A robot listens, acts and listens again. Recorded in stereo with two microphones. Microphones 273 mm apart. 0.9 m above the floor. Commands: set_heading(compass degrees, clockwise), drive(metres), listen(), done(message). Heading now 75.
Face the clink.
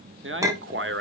set_heading(105)
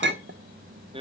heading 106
set_heading(241)
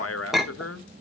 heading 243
done("Facing the clink, under 1 m away.")